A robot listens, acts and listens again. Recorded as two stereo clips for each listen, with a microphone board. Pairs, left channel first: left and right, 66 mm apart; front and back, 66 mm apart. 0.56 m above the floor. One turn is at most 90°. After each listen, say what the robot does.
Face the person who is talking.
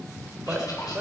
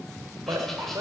Turn 90° right.
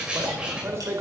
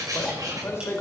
Turn 45° right.
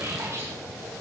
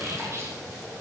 Keep listening.
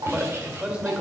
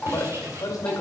Turn 15° right.
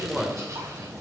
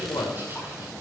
Facing the man speaking, 2 to 4 m away.